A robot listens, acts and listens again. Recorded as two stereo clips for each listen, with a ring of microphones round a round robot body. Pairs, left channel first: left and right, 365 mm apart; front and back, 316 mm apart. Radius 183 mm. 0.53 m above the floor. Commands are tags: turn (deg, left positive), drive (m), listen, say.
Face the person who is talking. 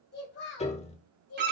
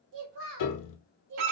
<turn deg="140"/>
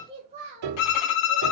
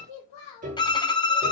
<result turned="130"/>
<turn deg="-20"/>
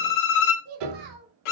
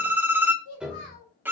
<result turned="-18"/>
<turn deg="-35"/>
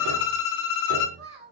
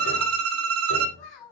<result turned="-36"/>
<say>Facing the child speaking.</say>